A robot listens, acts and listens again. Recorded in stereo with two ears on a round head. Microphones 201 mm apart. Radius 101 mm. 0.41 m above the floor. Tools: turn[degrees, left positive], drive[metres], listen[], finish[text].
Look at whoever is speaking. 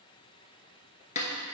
Action: listen[]
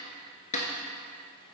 Action: listen[]
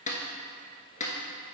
Action: finish[I can't make out anyone speaking to turn to.]